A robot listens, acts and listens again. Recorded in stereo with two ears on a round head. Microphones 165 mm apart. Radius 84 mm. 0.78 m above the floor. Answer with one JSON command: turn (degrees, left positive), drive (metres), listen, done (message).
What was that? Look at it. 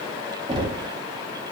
{"turn": -25}
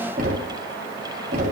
{"turn": -130}
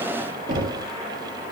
{"turn": -45}
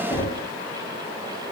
{"turn": 15}
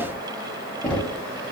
{"done": "Found it: knocking, straight ahead."}